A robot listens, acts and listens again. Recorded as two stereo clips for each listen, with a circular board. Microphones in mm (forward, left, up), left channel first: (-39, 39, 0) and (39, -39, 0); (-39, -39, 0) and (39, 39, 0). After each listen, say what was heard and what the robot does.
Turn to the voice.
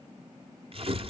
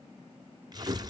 Keep listening.
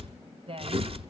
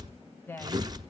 The woman speaking: 70° right. Turn 70° right.
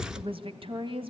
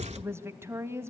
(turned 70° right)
The woman speaking is now 20° right. Turn 20° right.
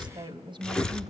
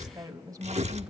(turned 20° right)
Facing the woman speaking.